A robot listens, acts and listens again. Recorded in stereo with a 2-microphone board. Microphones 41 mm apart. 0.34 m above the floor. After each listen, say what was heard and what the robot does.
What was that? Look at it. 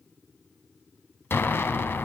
Turn 90° left.
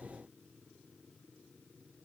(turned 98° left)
Nothing new. It was at 10° right. Turn 10° right.
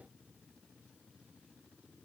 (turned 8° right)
I heard an explosion from this way, but can't make it out now.